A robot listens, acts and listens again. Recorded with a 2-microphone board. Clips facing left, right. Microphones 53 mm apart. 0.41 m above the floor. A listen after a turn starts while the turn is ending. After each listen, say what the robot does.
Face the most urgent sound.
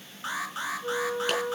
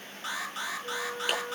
Turn 25° left.
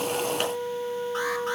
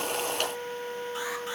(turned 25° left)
Keep listening.
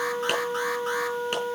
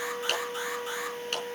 Keep listening.
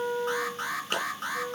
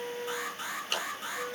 Turn 125° left.
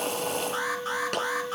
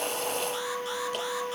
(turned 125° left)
Keep listening.
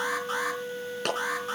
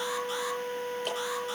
Keep listening.
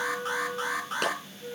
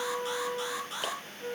Turn 35° left.
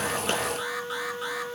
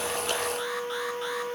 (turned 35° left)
Keep listening.
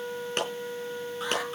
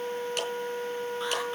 Keep listening.
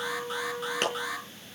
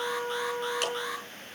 Found it: an alarm, straight ahead.